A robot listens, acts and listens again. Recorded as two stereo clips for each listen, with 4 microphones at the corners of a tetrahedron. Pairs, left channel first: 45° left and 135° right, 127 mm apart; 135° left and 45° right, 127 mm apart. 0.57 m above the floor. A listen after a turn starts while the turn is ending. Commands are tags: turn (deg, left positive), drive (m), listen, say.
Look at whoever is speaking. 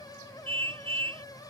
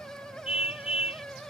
<listen/>
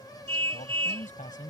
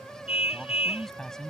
<turn deg="50"/>
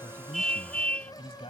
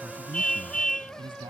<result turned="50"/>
<say>Found it: a man speaking, straight ahead.</say>